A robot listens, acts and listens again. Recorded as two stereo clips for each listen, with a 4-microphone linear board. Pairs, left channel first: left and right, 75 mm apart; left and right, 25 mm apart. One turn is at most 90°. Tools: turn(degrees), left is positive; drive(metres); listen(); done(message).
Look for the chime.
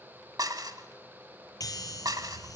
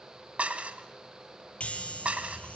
turn(degrees=60)
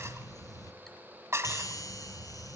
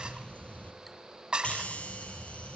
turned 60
turn(degrees=60)
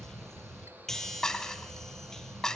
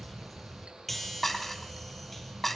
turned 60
done("Found it: a chime, straight ahead, 2 to 4 m away.")